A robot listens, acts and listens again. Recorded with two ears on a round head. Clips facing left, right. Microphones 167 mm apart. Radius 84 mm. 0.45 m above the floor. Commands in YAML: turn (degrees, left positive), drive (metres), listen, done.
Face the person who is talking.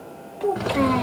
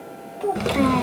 turn: -30
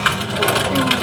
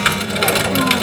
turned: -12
listen: true
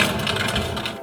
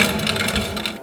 listen: true
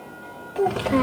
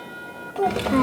turn: 10
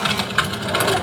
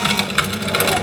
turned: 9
listen: true
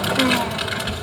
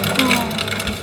listen: true
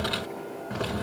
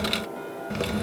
done: "Facing where the child speaking came from. I can't hear it now."